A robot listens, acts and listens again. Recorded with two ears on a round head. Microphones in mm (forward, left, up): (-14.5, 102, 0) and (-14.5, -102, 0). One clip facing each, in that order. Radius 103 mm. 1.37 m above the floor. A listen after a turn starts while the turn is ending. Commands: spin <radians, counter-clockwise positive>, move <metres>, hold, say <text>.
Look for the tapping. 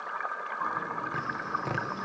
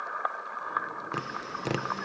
spin -0.79
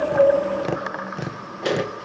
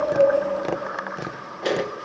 say Found it: tapping, straight ahead, under 1 m away.